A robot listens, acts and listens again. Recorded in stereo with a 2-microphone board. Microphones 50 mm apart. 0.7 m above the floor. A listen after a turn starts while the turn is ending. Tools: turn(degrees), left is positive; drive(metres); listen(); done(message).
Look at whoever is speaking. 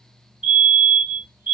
listen()
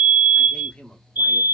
turn(degrees=20)
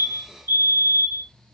listen()
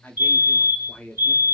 turn(degrees=140)
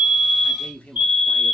turn(degrees=30)
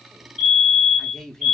turn(degrees=10)
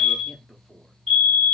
done("Facing the man speaking, under 1 m away.")